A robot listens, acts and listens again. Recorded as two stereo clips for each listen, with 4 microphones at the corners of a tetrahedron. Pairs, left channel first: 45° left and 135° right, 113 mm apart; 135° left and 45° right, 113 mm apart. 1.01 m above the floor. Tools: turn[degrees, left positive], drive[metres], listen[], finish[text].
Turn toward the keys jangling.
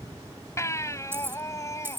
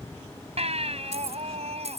Thought: The keys jangling: 65° right.
Action: turn[-65]
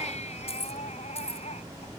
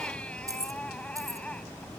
Thought: The keys jangling is now 15° left.
Action: turn[15]
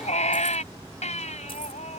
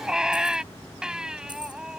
Action: listen[]
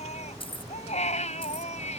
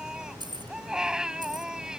Action: finish[Facing the keys jangling.]